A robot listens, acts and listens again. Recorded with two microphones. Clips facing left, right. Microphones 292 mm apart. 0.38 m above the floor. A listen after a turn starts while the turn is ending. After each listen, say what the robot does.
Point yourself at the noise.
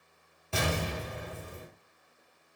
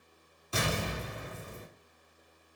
Turn 90° left.
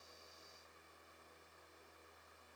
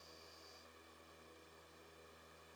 Facing where the explosion came from. I can't hear it now.